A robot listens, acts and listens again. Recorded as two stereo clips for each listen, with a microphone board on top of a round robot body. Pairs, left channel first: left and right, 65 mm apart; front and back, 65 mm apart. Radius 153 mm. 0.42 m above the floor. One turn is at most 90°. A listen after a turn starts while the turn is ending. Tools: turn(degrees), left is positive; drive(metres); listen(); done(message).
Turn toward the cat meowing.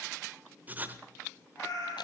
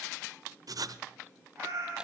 turn(degrees=90)
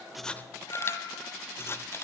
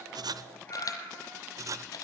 turn(degrees=60)
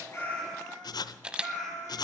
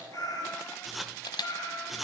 done("Found it: a cat meowing, straight ahead, over 4 m away.")